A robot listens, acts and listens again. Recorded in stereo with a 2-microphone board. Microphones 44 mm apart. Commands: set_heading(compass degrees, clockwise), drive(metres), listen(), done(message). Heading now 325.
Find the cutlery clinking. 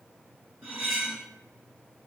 set_heading(355)
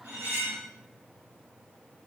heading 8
set_heading(133)
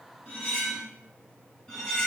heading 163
set_heading(133)
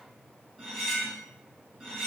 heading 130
done("Facing the cutlery clinking, 1 to 2 m away.")